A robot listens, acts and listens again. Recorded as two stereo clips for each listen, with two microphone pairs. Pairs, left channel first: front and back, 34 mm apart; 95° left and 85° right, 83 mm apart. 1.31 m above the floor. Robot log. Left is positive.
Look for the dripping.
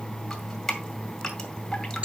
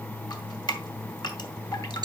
note: The dripping: 75° left.
cmd yaw +75
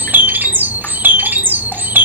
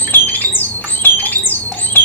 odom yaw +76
cmd idle
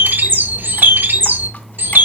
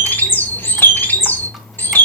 cmd idle
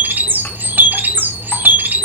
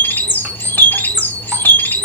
end: Facing where the dripping came from. I can't hear it now.